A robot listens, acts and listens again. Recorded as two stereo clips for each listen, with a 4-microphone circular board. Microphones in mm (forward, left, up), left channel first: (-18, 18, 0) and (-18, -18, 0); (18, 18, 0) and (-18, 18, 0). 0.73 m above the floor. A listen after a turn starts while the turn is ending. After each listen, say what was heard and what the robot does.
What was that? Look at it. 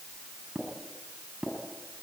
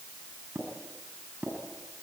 The tapping: 160° right. Turn 160° right.
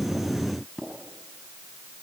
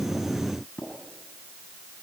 The tapping is now 10° right. Turn 10° right.
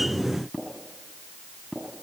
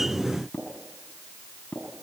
Found it: tapping, straight ahead.